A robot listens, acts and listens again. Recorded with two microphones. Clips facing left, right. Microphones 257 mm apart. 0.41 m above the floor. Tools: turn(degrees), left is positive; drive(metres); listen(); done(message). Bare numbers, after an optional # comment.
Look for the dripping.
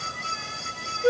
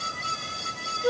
listen()
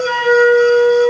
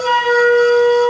listen()
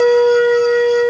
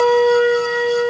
done("I can't make out dripping to turn to.")